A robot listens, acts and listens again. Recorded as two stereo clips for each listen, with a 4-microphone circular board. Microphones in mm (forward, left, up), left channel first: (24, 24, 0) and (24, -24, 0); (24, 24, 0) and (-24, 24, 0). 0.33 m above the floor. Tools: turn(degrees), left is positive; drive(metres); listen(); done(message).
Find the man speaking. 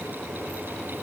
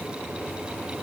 listen()
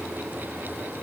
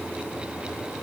listen()
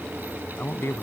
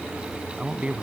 turn(degrees=115)
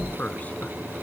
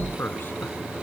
turn(degrees=35)
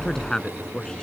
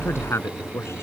turn(degrees=15)
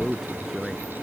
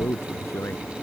done("Found it: a man speaking, straight ahead.")